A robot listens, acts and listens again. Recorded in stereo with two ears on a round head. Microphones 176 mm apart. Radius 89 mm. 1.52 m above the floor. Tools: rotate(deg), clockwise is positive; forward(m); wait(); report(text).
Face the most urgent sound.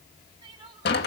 rotate(25)
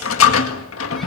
wait()
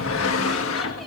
wait()
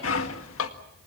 report("I heard crying, but can't make it out now. It was about straight ahead or 130° right.")